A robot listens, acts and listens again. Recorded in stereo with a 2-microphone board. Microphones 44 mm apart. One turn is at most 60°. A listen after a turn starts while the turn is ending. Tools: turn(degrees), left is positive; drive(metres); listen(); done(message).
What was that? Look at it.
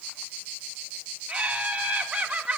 turn(degrees=-20)
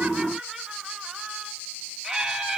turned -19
done("Facing the laughter.")